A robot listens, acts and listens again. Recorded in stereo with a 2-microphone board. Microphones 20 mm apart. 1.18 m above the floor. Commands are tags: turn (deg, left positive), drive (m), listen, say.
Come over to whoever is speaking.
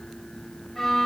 <listen/>
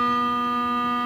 <listen/>
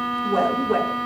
<turn deg="-15"/>
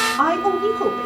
<turn deg="-150"/>
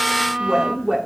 <turn deg="-40"/>
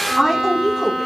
<drive m="1.0"/>
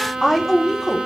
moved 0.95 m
<turn deg="10"/>
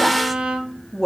<drive m="1.0"/>
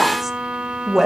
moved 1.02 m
<drive m="1.0"/>
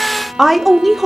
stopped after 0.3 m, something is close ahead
<say>I am next to the woman speaking.</say>